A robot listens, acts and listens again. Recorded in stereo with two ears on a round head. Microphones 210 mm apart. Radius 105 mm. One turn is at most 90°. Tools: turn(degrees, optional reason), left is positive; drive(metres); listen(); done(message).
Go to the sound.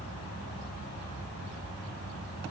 listen()
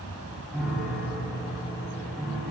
turn(degrees=30)
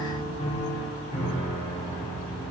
turn(degrees=90, reason="So it is at 150° left.")
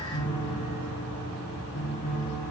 turn(degrees=40, reason="The piano is now 40° left.")
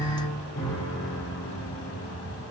turn(degrees=20, reason="The piano is now 20° left.")
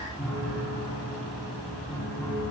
drive(metres=1.0)
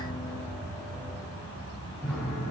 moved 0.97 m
drive(metres=1.0)
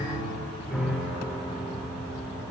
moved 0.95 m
drive(metres=1.0)
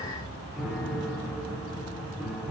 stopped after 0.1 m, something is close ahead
done("Arrived at the piano, straight ahead.")